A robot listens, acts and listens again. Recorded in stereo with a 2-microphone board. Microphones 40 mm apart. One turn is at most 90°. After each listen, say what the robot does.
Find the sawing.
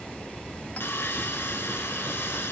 Turn 90° left.
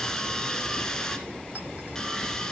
Turn 15° left.
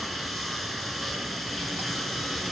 Found it: sawing, straight ahead, 1 to 2 m away.